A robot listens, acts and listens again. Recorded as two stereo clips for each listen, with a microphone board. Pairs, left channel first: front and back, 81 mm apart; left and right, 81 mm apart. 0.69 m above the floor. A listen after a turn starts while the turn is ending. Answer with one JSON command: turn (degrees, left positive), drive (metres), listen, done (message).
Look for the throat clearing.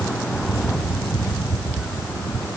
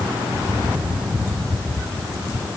{"listen": true}
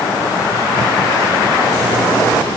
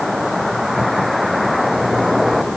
{"listen": true}
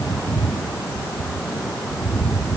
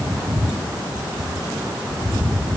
{"done": "I can't make out throat clearing."}